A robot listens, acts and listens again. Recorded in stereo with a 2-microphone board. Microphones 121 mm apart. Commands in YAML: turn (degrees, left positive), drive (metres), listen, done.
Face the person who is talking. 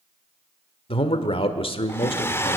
turn: 50
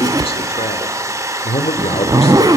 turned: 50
turn: 70
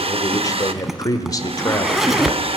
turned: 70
turn: 35
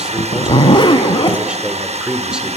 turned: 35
turn: -10
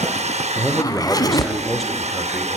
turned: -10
done: "Facing the man speaking."